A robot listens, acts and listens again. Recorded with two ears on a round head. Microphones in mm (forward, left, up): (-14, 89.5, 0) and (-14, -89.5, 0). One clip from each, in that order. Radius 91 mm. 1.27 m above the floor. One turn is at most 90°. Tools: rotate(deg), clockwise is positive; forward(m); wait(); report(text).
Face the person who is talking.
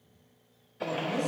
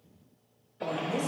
rotate(20)
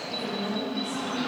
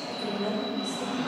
report("Facing the woman speaking, over 4 m away.")